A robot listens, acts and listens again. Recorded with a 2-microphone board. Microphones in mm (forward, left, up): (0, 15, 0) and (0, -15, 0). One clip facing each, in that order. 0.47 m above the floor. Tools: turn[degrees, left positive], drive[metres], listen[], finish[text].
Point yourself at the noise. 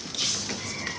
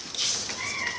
Thought: The cat meowing: about 35° right or 145° right.
Action: turn[-35]
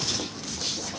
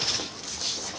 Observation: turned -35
Action: listen[]
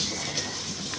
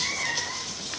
Thought: So it is at 115° right.
Action: turn[-115]
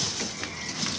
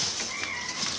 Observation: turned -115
Thought: The cat meowing is now 35° right.
Action: turn[-35]
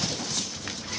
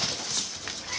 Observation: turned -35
Action: listen[]
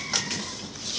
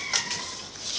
Thought: The cat meowing is now 15° right.
Action: turn[-15]
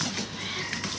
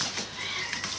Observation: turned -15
Action: finish[Facing the cat meowing.]